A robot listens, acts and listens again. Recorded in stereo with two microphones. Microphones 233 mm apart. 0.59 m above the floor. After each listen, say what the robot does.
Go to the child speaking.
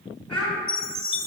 Turn 30° left.
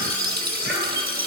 Keep listening.
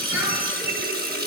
Keep listening.
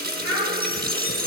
Turn 150° left.
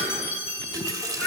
Turn 25° left.
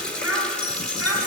Drive 1.0 m forward.
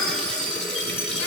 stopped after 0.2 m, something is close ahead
Keep listening.
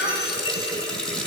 Blocked. The child speaking is further on, straight ahead.